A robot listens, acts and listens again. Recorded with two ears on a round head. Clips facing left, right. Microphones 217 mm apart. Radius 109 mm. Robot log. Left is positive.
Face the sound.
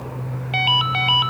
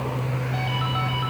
cmd yaw +90
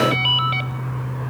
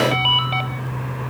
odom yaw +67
note: So it is at 20° left.
cmd yaw +20
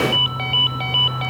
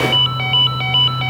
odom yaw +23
end: Facing the ringtone.